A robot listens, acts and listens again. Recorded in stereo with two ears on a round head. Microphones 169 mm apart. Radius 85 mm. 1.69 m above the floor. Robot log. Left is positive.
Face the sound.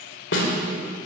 note: The snare drum: about 70° left or 110° left.
cmd yaw +70
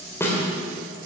note: So it is at 15° left.
cmd yaw +15
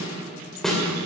end: Facing the snare drum, 2 to 4 m away.